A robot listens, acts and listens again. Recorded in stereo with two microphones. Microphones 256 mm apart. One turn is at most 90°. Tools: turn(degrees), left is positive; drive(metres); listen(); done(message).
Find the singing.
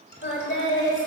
turn(degrees=50)
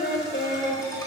turn(degrees=35)
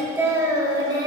turn(degrees=-15)
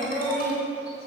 turn(degrees=-10)
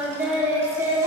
turn(degrees=-10)
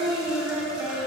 done("Found it: singing, straight ahead, 2 to 4 m away.")